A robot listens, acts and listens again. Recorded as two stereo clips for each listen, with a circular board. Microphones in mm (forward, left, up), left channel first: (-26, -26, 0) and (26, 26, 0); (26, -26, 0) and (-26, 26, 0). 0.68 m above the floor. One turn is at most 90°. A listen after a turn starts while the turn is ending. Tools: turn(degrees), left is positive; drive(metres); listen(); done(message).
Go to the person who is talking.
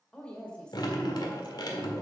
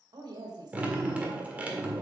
turn(degrees=90)
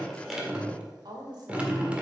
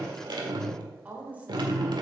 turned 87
turn(degrees=65)
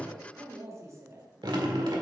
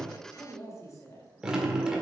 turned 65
drive(metres=1.0)
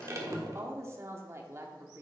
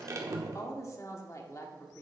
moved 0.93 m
drive(metres=1.0)
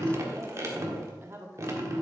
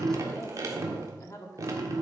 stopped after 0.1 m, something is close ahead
done("I am next to the woman speaking.")